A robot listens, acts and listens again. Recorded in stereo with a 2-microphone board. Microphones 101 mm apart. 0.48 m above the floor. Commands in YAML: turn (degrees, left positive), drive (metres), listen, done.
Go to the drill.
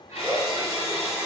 turn: -25
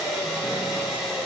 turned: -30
drive: 1.0
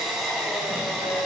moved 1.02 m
drive: 1.0
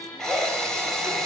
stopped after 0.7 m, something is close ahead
done: "I am next to the drill."